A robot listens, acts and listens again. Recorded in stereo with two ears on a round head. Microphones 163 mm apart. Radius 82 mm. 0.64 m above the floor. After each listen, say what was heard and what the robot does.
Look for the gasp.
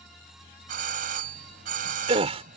The gasp: about 35° right or 145° right. Turn 35° right.
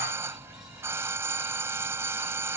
Keep listening.
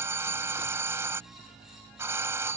I heard a gasp, but can't make it out now. It was about straight ahead or 110° right.